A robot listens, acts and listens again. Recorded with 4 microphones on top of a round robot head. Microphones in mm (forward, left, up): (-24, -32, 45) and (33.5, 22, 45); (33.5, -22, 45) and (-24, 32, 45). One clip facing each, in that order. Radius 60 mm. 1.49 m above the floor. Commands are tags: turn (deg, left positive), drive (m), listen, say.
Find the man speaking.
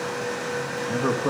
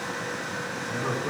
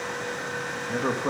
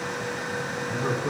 <turn deg="-100"/>
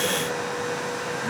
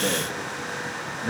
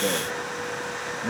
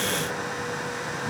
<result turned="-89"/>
<turn deg="-35"/>
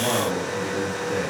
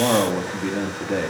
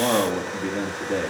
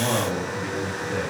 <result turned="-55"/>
<turn deg="10"/>
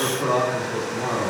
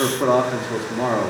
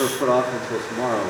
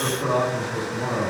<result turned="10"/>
<say>Facing the man speaking, 2 to 4 m away.</say>